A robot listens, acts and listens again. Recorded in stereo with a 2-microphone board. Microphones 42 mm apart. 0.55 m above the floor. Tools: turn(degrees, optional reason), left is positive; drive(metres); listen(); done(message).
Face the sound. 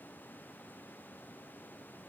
listen()
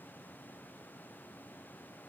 listen()
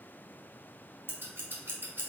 turn(degrees=-60, reason="The scissors: about 60° right or 120° right.")
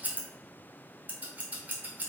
turn(degrees=-45, reason="So it is at 45° right.")
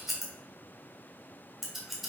done("Facing the scissors, 1 to 2 m away.")